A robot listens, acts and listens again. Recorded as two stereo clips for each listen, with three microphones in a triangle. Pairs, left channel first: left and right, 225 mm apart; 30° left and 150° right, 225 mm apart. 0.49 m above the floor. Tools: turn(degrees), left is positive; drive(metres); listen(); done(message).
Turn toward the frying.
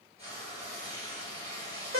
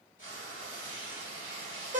turn(degrees=-25)
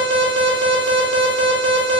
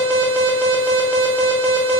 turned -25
listen()
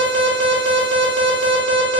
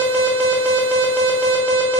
listen()
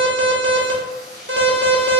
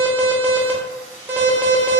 done("Facing the frying.")